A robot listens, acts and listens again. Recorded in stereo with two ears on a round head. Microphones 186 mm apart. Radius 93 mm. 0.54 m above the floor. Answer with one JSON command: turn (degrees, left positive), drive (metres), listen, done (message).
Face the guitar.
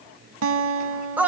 {"turn": -70}
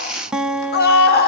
{"done": "Found it: a guitar, straight ahead."}